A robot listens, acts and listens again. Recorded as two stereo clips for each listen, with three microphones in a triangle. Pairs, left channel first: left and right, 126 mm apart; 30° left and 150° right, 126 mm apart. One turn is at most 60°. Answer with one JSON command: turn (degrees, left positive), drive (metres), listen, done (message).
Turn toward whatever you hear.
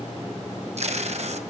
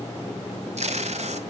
{"turn": -60}
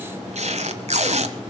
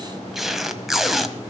{"turn": -60}
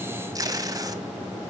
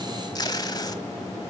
{"turn": -30}
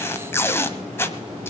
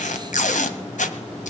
{"turn": 20}
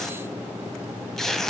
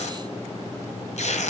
{"done": "Facing the tape being pulled, 1 to 2 m away."}